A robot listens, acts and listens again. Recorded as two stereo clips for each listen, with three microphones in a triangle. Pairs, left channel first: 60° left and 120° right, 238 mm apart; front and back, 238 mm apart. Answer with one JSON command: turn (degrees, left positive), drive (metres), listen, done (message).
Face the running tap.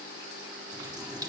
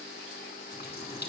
{"turn": -45}
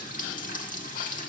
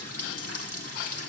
{"done": "Facing the running tap."}